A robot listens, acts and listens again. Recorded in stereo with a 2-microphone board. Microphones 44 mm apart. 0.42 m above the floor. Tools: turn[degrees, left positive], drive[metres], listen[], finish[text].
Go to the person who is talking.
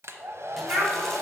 Thought: The child speaking: about 45° right or 135° right.
Action: turn[-45]
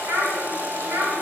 Thought: So it is at 90° right.
Action: turn[-90]
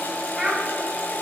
Action: drive[1.0]
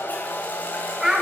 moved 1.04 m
Thought: The child speaking is now 10° right.
Action: turn[-10]
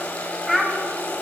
Action: drive[1.0]
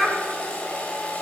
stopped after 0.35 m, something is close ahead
Action: finish[I am next to the child speaking.]